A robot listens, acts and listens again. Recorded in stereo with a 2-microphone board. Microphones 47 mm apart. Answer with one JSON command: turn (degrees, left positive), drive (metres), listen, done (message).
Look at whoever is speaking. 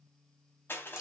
{"listen": true}
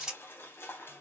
{"listen": true}
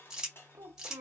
{"turn": -90}
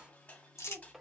{"done": "Facing the child speaking, 1 to 2 m away."}